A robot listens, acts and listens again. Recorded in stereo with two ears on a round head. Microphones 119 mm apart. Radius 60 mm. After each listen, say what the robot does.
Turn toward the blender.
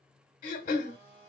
Turn 40° right.
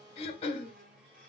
Turn 95° right.
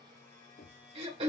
Turn 20° left.
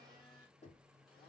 Keep listening.
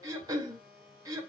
Facing the blender, 1 to 2 m away.